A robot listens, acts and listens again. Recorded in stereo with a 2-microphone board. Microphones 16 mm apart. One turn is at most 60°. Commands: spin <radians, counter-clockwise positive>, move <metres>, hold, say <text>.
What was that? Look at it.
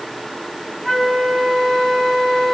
spin 0.61
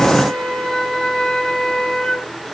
spin 1.05
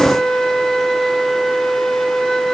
spin 0.79
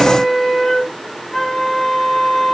spin 0.26
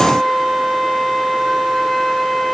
say Facing the flute, 2 to 4 m away.